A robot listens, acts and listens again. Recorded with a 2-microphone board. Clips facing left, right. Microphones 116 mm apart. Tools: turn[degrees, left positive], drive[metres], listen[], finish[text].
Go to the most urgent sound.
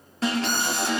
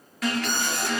Thought: The alarm: about 30° left or 150° left.
Action: turn[30]
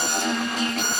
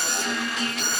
Thought: So it is at 120° left.
Action: turn[120]
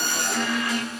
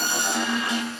Thought: The alarm is now 30° right.
Action: turn[-30]
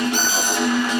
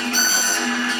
Thought: The alarm is now 20° left.
Action: turn[20]
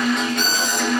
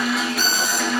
Action: drive[1.0]
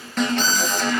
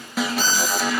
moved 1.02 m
Thought: The alarm is now 10° right.
Action: turn[-10]
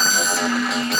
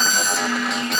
Action: drive[1.0]
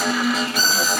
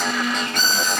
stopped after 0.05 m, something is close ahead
Action: finish[I am next to the alarm.]